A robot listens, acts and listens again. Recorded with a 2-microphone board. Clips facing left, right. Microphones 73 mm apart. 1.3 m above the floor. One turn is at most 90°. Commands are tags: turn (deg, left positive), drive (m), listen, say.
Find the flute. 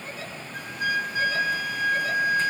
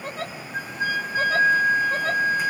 <turn deg="-40"/>
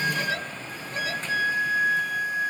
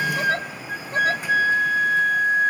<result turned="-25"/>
<turn deg="-90"/>
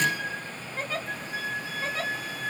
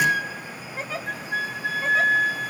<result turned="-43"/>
<turn deg="-75"/>
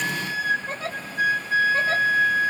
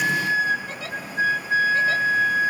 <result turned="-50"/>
<turn deg="-25"/>
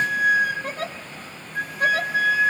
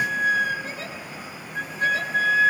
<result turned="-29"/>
<say>Facing the flute.</say>